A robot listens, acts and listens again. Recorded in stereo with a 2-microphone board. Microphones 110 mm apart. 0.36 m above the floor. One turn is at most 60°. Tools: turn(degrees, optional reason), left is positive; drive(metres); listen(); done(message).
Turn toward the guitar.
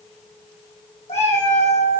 listen()
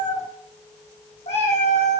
listen()
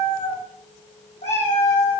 done("I can't make out a guitar, only a cat meowing.")